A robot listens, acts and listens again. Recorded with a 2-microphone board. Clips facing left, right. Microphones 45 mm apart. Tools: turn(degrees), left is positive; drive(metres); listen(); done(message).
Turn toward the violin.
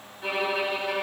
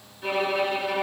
turn(degrees=30)
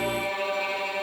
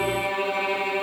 turn(degrees=-25)
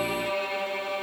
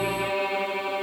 turn(degrees=-15)
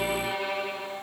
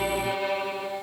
done("Facing the violin, 1 to 2 m away.")